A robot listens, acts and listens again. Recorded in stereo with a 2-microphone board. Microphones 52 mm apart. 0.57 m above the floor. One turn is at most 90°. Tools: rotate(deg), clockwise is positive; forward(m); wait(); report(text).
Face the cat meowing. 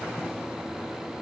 wait()
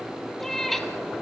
rotate(-30)
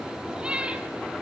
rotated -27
rotate(20)
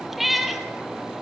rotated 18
report("Facing the cat meowing.")